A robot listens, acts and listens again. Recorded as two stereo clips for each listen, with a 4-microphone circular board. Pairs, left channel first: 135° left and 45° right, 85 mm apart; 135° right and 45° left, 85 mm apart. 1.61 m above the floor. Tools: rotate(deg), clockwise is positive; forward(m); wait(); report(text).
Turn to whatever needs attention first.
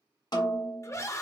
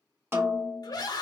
rotate(170)
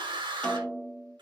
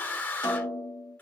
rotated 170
rotate(65)
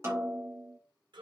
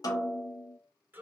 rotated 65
rotate(20)
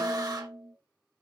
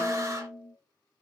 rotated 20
wait()
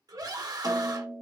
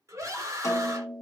report("Found it: a scream, straight ahead.")